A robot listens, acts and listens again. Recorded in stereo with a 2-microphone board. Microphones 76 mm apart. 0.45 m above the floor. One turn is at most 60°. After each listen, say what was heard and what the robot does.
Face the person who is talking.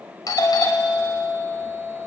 Keep listening.
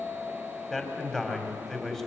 Turn 30° left.
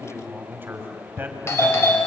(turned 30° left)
So it is at 25° right. Turn 25° right.
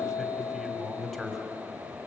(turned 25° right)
Facing the man speaking, 2 to 4 m away.